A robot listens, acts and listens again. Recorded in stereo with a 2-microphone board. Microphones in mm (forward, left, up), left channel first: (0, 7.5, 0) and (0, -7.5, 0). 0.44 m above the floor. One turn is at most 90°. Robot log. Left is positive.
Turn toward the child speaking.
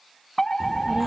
note: The child speaking: about 55° right or 125° right.
cmd yaw -55
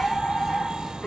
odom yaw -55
end: Found it: a child speaking, straight ahead.